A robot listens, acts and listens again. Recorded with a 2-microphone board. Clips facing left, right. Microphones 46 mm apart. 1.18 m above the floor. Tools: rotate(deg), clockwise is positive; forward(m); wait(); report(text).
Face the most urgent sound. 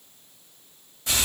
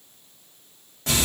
wait()
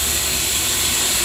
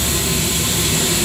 wait()
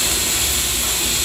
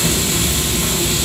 report("I can't make out anything urgent, only frying.")